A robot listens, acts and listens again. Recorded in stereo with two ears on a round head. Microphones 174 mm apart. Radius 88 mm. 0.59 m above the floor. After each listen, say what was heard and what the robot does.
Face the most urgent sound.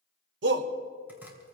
The shout: about 65° right or 115° right. Turn 65° right.
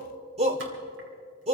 So it is at 35° right. Turn 35° right.
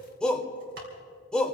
Facing the shout, 1 to 2 m away.